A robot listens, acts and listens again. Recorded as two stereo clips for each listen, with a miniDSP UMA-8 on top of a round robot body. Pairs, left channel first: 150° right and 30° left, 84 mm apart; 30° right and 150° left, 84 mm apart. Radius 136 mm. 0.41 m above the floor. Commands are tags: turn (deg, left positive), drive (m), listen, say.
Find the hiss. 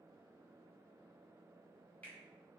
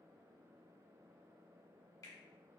<listen/>
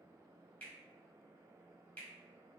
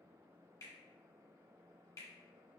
<listen/>
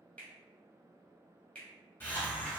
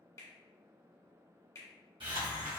<turn deg="145"/>
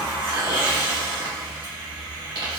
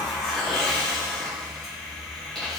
<turn deg="55"/>
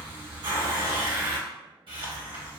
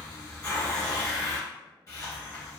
<turn deg="25"/>
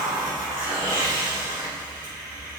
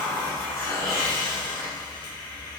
<say>Found it: a hiss, straight ahead, 2 to 4 m away.</say>